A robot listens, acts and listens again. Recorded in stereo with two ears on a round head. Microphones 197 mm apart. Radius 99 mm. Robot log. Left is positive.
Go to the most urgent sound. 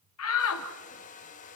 note: The shout: about 75° left or 105° left.
cmd yaw +75
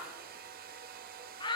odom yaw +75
note: So it is at 20° left.
cmd yaw +20
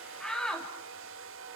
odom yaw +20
cmd fwd 1.0
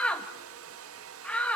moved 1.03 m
cmd fwd 1.0
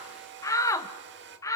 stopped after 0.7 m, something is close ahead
note: The shout is now 15° left.
cmd yaw +15
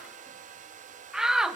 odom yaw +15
end: I am next to the shout.